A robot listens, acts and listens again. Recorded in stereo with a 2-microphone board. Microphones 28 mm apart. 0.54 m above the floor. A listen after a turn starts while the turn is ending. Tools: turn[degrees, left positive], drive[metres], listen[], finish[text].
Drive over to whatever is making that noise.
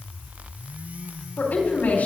Action: turn[90]
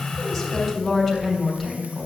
Action: drive[1.0]
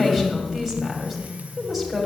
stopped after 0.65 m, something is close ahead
Action: finish[Something is in my way. I am facing the woman speaking but have not reached it.]